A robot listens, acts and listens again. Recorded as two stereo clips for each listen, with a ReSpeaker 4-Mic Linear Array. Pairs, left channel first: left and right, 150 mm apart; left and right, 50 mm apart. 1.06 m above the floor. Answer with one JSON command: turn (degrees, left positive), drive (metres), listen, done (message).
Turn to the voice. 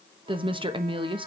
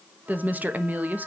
{"turn": -35}
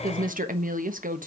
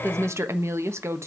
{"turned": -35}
{"turn": -110}
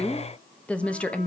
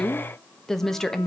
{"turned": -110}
{"turn": 10}
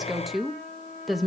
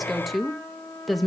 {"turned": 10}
{"done": "Facing the woman speaking, 1 to 2 m away."}